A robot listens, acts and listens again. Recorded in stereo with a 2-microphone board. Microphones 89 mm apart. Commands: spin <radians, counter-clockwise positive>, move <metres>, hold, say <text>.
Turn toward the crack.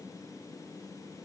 hold
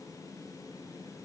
hold
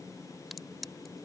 spin 0.52
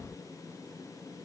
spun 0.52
hold
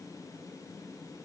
say I heard a crack, but can't make it out now. It was about 30° right or 150° left.